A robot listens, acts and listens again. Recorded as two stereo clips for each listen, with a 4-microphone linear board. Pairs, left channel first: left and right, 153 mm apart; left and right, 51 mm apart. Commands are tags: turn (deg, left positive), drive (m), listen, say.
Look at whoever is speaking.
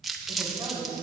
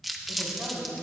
<turn deg="-30"/>
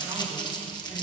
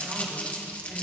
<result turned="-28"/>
<listen/>
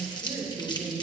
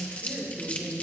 <turn deg="-120"/>
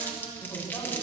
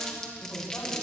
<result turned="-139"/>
<turn deg="20"/>
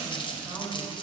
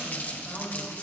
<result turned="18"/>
<say>Facing the woman speaking.</say>